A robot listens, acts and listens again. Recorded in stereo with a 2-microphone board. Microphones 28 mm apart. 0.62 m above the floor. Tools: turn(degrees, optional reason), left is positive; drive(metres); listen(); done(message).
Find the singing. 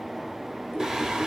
turn(degrees=-20, reason="The singing: about 20° right or 160° right.")
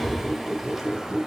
listen()
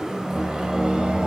turn(degrees=-30, reason="The singing: about 30° right or 150° right.")
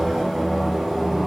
turn(degrees=-10, reason="So it is at 10° right.")
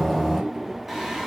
turn(degrees=-10, reason="The singing is now 10° right.")
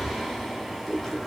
done("Facing the singing, 2 to 4 m away.")